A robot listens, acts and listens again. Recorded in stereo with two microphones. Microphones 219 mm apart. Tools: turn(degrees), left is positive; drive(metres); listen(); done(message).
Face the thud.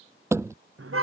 turn(degrees=-30)
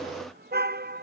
listen()
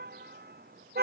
done("I heard a thud, but can't make it out now. It was about 20° left or 140° right.")